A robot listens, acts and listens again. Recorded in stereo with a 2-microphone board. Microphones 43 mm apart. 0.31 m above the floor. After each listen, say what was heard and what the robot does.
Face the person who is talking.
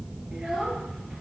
The child speaking: about 20° right or 160° right. Turn 20° right.
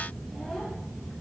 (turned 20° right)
Keep listening.
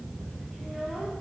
Keep listening.
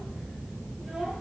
I heard a child speaking, but can't make it out now. It was about straight ahead or 140° right.